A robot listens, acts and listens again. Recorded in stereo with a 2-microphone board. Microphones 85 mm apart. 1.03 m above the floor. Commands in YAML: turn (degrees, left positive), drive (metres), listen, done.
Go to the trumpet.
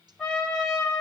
turn: 30
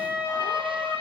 turn: -25
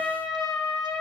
drive: 1.0
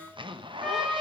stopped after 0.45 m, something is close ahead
done: "Blocked. The trumpet is further on, straight ahead."